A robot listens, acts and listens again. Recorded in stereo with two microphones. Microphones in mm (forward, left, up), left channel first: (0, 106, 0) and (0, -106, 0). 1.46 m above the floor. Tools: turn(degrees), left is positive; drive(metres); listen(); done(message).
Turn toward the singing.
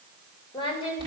turn(degrees=25)
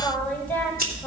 listen()
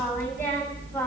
listen()
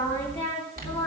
turn(degrees=30)
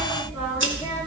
listen()
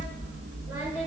listen()
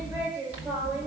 turn(degrees=-15)
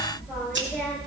listen()
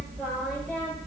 listen()
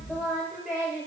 done("Facing the singing, over 4 m away.")